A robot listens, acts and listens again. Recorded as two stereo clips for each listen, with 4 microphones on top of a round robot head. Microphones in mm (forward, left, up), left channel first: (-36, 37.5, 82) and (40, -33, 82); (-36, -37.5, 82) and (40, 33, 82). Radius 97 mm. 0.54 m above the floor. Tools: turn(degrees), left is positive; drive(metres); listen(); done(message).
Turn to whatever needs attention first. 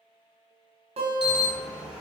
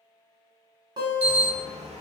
turn(degrees=40)
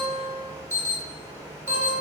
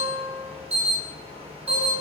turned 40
turn(degrees=25)
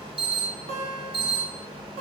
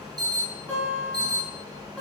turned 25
turn(degrees=-10)
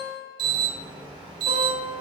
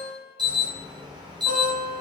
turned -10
done("Found it: an alarm, straight ahead, 1 to 2 m away.")